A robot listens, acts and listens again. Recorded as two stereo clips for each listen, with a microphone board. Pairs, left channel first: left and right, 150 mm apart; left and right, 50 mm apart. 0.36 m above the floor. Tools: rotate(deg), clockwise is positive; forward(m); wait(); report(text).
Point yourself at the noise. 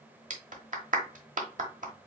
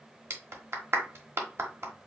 rotate(60)
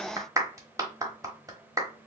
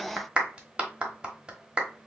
rotate(25)
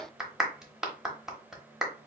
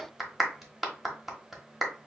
report("Found it: a clap, straight ahead.")